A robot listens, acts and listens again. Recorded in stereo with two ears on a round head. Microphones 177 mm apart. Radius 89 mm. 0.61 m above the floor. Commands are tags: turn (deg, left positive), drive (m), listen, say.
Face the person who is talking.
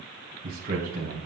<turn deg="-45"/>
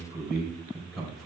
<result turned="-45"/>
<say>Found it: a man speaking, straight ahead, 2 to 4 m away.</say>